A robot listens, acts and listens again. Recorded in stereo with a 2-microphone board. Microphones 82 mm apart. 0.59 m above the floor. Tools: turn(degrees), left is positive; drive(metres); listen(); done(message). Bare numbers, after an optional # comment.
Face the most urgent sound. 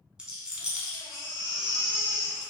# The baby crying: about 70° left or 110° left.
turn(70)
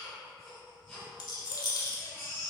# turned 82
done("Found it: a baby crying, straight ahead.")